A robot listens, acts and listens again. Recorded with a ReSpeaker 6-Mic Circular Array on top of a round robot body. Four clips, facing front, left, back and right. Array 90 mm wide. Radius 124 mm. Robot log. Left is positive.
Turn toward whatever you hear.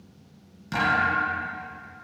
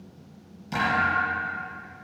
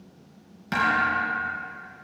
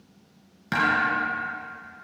note: The thud: 115° right.
cmd yaw -115
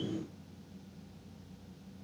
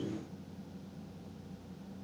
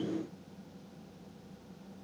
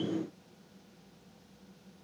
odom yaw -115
end: Facing where the thud came from. I can't hear it now.